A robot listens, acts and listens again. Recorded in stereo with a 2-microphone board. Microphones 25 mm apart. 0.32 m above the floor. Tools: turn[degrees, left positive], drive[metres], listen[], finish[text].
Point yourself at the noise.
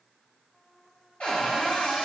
Thought: The cupboard door: about 55° left or 125° left.
Action: turn[55]
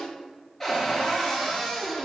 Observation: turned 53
Thought: So it is at 10° left.
Action: turn[10]
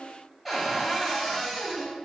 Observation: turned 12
Action: finish[Facing the cupboard door.]